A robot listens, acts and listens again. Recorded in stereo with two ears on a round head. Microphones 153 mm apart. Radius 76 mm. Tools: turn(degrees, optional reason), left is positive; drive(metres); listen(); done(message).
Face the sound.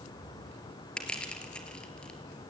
turn(degrees=30)
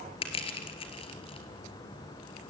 turn(degrees=145, reason="So it is at 145° left.")
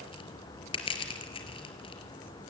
turn(degrees=30, reason="The crushing is now 30° left.")
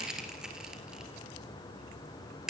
done("Found it: crushing, straight ahead.")